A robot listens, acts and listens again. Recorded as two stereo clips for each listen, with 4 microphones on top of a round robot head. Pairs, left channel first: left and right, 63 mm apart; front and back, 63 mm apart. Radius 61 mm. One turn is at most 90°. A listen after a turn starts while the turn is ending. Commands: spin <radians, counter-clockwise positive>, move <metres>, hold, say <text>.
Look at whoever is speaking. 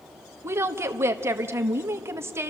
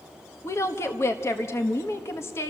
spin -0.79
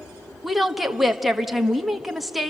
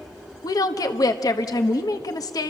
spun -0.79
say Found it: a woman speaking, straight ahead, 1 to 2 m away.